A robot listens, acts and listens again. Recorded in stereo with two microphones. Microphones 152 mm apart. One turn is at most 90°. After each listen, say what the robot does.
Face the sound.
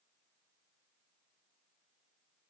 Keep listening.
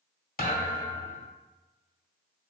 Turn 75° left.
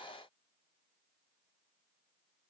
Keep listening.
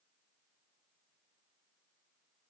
I heard a thud, but can't make it out now. It was about straight ahead or 30° left.